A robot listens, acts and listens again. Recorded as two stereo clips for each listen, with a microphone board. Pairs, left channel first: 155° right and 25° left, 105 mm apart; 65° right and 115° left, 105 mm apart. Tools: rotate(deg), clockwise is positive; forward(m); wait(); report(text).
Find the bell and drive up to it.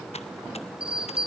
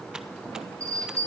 rotate(-55)
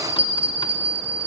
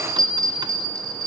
rotate(-15)
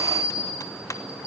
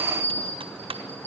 forward(1.0)
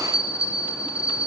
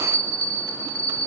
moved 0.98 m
forward(1.0)
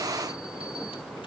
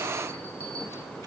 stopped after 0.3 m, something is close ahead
wait()
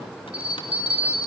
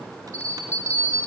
report("Blocked. The bell is further on, straight ahead.")